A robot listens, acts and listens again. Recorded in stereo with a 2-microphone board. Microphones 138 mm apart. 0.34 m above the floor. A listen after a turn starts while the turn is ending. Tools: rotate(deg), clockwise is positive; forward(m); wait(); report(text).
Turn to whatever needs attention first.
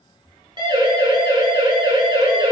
rotate(35)
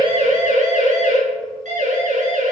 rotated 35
rotate(110)
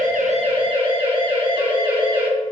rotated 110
rotate(40)
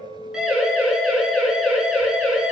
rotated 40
report("Facing the siren, over 4 m away.")